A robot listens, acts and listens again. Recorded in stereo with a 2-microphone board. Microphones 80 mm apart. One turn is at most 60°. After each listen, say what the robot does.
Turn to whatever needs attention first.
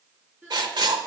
Turn 25° right.
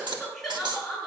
Found it: crying, straight ahead.